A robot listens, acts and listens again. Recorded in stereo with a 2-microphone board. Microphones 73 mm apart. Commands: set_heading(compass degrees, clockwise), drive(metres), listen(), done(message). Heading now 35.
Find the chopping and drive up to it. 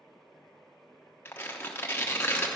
listen()
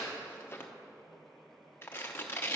listen()
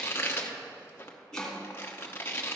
set_heading(5)
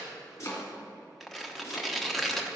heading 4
set_heading(224)
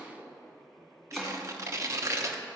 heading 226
drive(1.0)
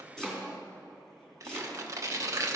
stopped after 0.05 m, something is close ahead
set_heading(216)
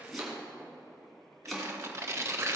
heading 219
done("Blocked. The chopping is further on, straight ahead.")